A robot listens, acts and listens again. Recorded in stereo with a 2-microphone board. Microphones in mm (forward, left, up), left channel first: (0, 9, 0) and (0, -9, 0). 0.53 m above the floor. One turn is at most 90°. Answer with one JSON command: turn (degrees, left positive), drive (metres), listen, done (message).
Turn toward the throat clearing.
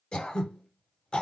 {"turn": 90}
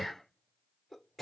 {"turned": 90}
{"done": "Found it: throat clearing, straight ahead, 1 to 2 m away."}